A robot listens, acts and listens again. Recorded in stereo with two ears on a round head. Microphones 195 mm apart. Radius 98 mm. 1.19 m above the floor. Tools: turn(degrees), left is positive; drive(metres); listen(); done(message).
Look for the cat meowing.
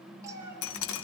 turn(degrees=-15)
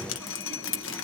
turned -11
listen()
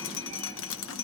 listen()
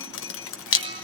done("I heard a cat meowing, but can't make it out now. It was about 5° right or 155° right.")